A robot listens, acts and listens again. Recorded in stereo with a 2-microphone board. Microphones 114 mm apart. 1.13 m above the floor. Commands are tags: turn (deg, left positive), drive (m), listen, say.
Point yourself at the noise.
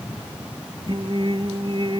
<turn deg="-45"/>
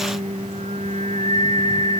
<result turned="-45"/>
<turn deg="-90"/>
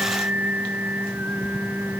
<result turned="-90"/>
<turn deg="-15"/>
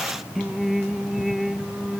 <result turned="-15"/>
<say>Found it: singing, straight ahead.</say>